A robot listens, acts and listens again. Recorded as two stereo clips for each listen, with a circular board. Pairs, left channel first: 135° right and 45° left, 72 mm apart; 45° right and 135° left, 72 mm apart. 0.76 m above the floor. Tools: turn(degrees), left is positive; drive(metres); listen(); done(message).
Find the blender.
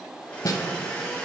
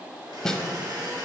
turn(degrees=160)
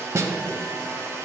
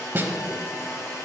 done("Facing the blender.")